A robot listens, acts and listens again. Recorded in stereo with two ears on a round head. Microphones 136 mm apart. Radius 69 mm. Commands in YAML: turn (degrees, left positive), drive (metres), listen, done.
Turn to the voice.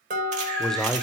turn: 30
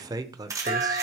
turn: -25
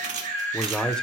done: "Facing the man speaking."